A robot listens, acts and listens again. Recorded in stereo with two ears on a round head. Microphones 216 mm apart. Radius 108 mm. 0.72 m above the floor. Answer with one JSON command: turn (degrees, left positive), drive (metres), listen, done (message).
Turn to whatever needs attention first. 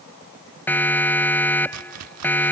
{"turn": 30}
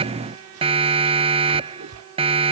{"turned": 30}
{"turn": -25}
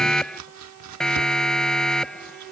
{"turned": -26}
{"done": "Facing the siren."}